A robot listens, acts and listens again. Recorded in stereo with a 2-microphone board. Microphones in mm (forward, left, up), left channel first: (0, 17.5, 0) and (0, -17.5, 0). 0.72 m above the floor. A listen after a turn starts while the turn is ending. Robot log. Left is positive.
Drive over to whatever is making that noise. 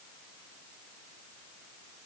cmd idle
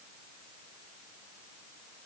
cmd idle
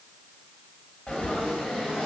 note: The frying: about 40° left or 140° left.
cmd yaw +40
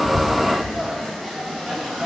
cmd fwd 1.0
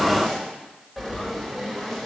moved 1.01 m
cmd fwd 1.0
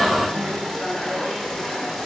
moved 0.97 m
note: The frying is now 10° left.
cmd yaw +10
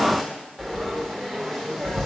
cmd fwd 1.0
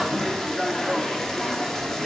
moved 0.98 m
note: The frying is now 15° left.
cmd yaw +15
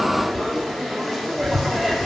cmd fwd 1.0
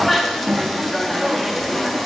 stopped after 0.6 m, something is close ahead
end: Arrived at the frying, straight ahead.